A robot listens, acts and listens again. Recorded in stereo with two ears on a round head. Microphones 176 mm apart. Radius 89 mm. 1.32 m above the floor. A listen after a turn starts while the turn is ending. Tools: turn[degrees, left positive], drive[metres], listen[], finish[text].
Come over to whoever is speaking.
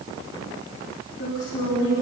Thought: The woman speaking: about 60° left or 120° left.
Action: turn[60]
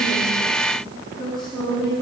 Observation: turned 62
Action: drive[1.0]
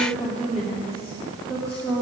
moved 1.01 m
Action: drive[1.0]
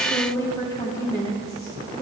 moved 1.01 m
Thought: The woman speaking is now 20° left.
Action: turn[20]
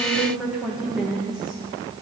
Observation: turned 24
Action: drive[1.0]
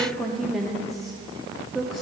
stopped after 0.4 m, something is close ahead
Action: finish[I am next to the woman speaking.]